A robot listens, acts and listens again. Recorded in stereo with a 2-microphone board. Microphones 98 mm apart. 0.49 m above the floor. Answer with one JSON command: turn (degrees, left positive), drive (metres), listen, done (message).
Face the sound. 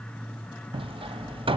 {"turn": -65}
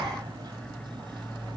{"listen": true}
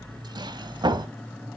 {"turn": -50}
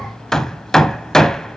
{"done": "Found it: hammering, straight ahead."}